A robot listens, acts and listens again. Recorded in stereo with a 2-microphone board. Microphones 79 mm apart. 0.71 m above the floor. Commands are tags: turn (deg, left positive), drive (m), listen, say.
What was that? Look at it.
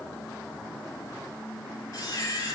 <turn deg="40"/>
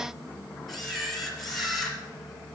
<say>Found it: a camera shutter, straight ahead.</say>